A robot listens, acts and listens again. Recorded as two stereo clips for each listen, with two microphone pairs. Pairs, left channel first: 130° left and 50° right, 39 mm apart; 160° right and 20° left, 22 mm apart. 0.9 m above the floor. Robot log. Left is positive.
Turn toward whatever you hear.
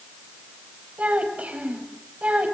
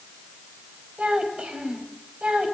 end: Facing the child speaking, 2 to 4 m away.